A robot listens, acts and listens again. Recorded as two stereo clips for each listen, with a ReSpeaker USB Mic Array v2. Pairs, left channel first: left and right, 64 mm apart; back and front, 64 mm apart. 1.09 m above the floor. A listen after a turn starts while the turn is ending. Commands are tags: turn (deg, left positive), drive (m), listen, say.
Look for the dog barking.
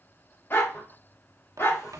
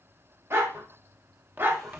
<turn deg="45"/>
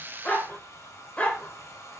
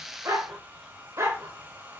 <turn deg="30"/>
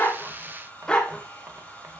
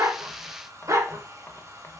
<turn deg="20"/>
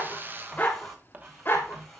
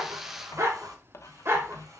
<turn deg="40"/>
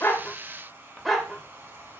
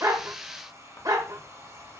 <say>Facing the dog barking, 1 to 2 m away.</say>